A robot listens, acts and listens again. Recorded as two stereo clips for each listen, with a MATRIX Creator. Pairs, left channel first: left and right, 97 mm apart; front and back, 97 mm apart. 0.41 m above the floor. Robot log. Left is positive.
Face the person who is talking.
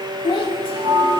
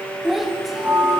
note: The child speaking: 95° left.
cmd yaw +95
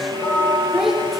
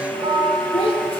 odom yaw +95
end: Facing the child speaking, under 1 m away.